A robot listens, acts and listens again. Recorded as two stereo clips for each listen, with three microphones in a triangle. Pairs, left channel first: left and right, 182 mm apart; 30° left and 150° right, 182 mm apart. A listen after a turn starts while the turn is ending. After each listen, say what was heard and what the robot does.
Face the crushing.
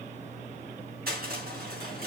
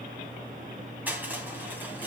The crushing: 70° right. Turn 70° right.
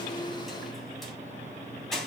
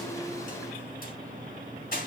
Facing the crushing.